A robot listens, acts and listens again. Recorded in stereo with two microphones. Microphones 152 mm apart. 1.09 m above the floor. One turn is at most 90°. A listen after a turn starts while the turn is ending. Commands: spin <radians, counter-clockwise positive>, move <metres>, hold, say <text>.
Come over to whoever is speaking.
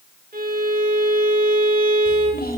spin 1.57
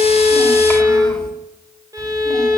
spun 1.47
hold
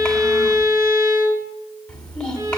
move 1.0
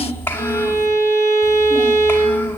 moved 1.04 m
spin 0.26
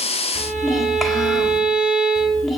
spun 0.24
move 1.0
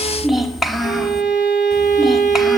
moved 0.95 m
move 1.0
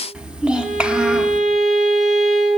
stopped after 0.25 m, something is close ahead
say I am next to the child speaking.